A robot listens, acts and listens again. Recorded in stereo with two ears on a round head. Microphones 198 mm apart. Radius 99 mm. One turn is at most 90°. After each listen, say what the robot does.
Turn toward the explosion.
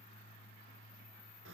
Keep listening.
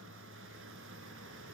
Keep listening.
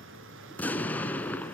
Turn 30° left.
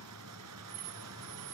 Keep listening.
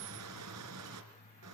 I heard an explosion, but can't make it out now. It was about 25° right or 145° left.